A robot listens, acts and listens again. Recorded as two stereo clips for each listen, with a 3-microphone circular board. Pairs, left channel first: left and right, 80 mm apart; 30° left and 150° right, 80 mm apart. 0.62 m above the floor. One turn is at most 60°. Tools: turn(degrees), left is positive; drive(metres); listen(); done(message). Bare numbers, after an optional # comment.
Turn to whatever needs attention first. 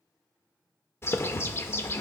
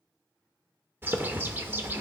listen()
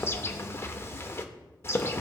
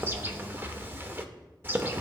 listen()
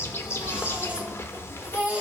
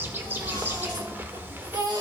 # The baby crying: 165° right.
turn(-60)
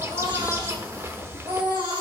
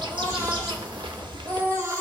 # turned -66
# The baby crying is now 100° right.
turn(-60)
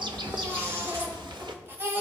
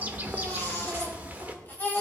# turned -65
# The baby crying is now 35° right.
turn(-35)
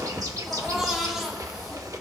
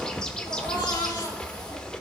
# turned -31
done("Facing the baby crying.")